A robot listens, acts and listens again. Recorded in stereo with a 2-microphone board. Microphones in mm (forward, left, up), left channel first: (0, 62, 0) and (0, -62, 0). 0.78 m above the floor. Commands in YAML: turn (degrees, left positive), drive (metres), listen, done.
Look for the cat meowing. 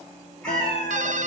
turn: 30
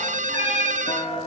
turn: 140
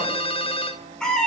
done: "Facing the cat meowing, 1 to 2 m away."